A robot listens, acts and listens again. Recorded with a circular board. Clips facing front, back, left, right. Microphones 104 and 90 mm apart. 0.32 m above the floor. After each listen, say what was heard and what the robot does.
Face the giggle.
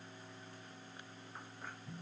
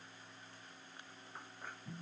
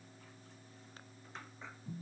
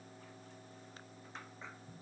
Keep listening.
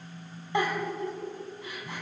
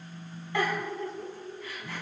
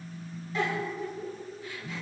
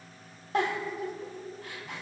The giggle: 70° right. Turn 70° right.
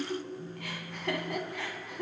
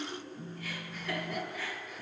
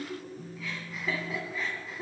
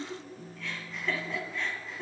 Facing the giggle.